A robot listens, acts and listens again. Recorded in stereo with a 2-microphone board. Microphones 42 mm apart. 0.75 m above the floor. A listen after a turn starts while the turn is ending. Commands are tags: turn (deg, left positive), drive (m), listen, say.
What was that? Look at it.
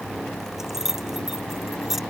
<turn deg="-30"/>
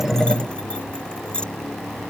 <turn deg="25"/>
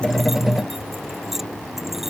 <listen/>
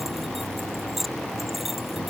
<say>Found it: keys jangling, straight ahead.</say>